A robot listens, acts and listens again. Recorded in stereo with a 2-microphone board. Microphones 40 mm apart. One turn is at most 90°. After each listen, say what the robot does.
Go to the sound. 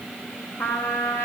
Turn 90° left.
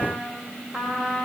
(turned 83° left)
Turn 10° left.
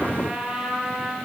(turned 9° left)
Drive 1.0 m forward.
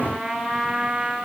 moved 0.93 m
Drive 1.0 m forward.
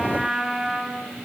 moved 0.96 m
Drive 1.0 m forward.
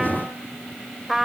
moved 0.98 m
Drive 1.0 m forward.
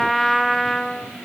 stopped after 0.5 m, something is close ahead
Arrived at the trumpet, straight ahead.